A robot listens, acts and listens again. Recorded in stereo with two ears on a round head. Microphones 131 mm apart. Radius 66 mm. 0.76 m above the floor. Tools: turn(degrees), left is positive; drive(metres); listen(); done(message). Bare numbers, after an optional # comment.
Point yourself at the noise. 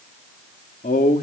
# The man speaking: about 60° left or 120° left.
turn(60)
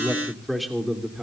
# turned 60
done("Found it: a man speaking, straight ahead, 2 to 4 m away.")